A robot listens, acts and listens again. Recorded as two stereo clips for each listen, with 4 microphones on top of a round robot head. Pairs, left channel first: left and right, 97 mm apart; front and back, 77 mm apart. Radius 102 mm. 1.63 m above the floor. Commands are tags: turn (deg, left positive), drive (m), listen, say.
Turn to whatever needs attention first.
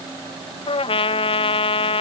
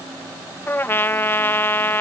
<listen/>
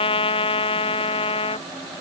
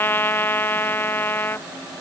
<listen/>
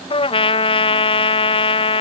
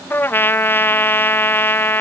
<say>I can't make out anything urgent, only a trumpet.</say>